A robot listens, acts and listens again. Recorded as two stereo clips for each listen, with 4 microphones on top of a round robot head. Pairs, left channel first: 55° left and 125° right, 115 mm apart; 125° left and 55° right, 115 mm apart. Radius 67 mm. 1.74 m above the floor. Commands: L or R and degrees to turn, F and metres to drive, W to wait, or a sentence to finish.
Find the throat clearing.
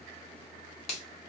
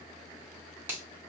W
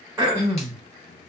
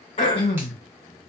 L165
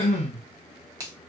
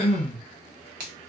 L80
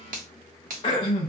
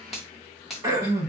Facing the throat clearing.